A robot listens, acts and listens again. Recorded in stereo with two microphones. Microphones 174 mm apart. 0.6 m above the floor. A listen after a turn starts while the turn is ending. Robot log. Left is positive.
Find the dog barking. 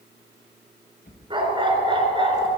note: The dog barking: about 30° right or 150° right.
cmd yaw -30
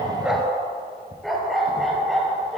end: Found it: a dog barking, straight ahead.